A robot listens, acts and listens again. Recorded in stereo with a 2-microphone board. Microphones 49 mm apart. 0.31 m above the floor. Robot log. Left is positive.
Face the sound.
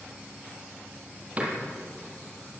note: The door slam: about 30° right or 150° right.
cmd yaw -30
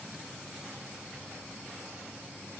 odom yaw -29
cmd idle
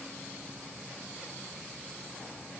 end: I heard a door slam, but can't make it out now. It was about straight ahead or 120° right.